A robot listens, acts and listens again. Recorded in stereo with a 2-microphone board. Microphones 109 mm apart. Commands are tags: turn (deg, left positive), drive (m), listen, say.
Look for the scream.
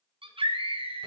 <turn deg="-60"/>
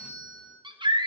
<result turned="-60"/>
<turn deg="-55"/>
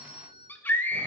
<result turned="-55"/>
<turn deg="20"/>
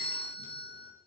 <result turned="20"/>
<listen/>
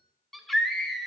<say>Found it: a scream, straight ahead.</say>